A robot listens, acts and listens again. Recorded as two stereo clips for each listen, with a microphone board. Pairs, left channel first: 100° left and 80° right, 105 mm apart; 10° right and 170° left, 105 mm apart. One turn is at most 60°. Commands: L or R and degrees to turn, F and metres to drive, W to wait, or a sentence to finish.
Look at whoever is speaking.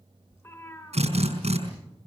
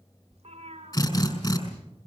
W
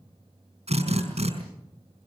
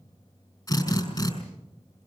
W
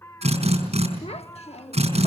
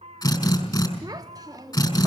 L60
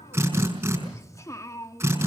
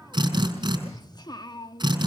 L40
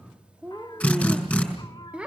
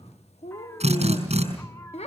Found it: a child speaking, straight ahead, 1 to 2 m away.